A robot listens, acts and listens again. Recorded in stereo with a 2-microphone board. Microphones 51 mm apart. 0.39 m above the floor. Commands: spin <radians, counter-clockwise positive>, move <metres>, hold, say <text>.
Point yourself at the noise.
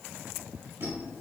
spin -1.05
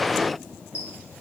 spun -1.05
spin -0.61
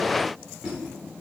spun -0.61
spin -0.17
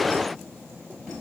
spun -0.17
say Facing the squeak.